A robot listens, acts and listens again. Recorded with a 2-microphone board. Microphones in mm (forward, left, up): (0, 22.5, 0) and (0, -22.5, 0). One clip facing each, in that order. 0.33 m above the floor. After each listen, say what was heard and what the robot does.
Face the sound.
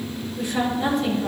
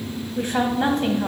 The woman speaking: about 50° right or 130° right. Turn 50° right.
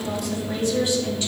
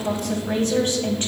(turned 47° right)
So it is at 70° right. Turn 70° right.
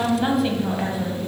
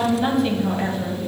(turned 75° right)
Facing the woman speaking, 2 to 4 m away.